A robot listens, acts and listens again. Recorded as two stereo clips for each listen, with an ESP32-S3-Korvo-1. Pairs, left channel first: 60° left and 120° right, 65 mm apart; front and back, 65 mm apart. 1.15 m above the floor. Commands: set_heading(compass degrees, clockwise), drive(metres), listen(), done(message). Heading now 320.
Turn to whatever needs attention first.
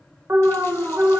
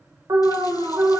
set_heading(140)
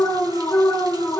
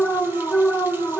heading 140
set_heading(90)
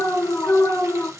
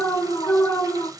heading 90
set_heading(80)
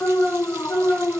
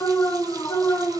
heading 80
done("Facing the alarm, 1 to 2 m away.")